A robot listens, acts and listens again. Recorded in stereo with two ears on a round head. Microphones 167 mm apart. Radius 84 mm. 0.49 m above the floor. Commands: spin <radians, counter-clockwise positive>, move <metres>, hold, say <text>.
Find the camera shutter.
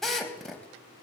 hold
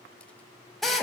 hold
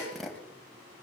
say I can't make out a camera shutter, only a drill.